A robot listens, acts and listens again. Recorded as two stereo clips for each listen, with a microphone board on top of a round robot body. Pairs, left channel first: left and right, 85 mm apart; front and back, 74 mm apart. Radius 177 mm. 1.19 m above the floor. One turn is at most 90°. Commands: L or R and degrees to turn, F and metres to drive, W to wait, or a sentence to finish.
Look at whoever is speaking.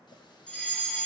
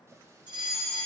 W
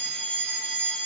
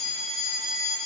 W
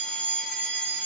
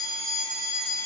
I can't make out anyone speaking to turn to.